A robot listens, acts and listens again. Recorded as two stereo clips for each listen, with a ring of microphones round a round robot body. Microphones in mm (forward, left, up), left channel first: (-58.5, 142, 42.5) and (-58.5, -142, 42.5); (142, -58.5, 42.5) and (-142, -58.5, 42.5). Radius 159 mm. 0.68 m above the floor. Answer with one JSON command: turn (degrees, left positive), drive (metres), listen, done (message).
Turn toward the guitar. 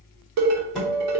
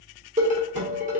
{"turn": 180}
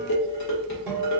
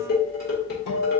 {"done": "Found it: a guitar, straight ahead, 1 to 2 m away."}